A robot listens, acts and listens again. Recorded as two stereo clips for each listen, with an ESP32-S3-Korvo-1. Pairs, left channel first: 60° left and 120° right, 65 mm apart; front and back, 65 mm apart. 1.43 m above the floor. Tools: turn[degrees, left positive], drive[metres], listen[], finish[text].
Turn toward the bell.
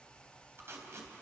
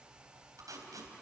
Action: listen[]
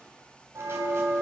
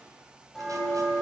Thought: The bell: 85° right.
Action: turn[-85]
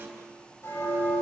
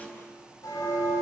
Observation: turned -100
Thought: The bell is now 15° left.
Action: turn[15]
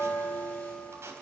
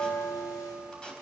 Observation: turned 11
Action: finish[Found it: a bell, straight ahead, over 4 m away.]